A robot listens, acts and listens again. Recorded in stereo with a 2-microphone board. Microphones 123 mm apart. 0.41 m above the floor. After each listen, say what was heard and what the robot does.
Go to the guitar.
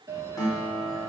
The guitar: about 25° left or 155° left. Turn 25° left.
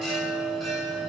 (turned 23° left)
Keep listening.
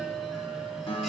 So it is at 130° left. Turn 130° left.
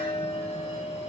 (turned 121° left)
Nothing new. It was at 10° left. Turn 10° left.
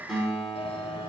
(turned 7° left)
Drive 1.0 m forward.
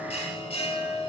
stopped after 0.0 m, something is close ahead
Keep listening.
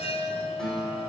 Blocked. The guitar is further on, straight ahead.